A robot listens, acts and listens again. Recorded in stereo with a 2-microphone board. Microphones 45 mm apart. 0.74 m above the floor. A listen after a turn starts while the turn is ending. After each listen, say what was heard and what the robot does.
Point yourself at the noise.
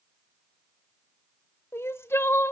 The crying: about 70° left or 110° left. Turn 70° left.
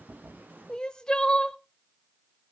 So it is at 20° left. Turn 20° left.
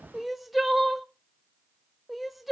Facing the crying.